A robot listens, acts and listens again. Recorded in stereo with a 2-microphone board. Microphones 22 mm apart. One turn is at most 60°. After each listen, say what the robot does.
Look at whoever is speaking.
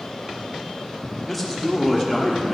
Turn 30° right.
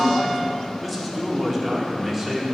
Turn 20° right.
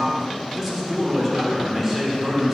Turn 30° right.
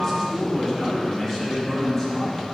Turn 15° left.
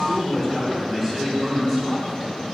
Found it: a man speaking, straight ahead.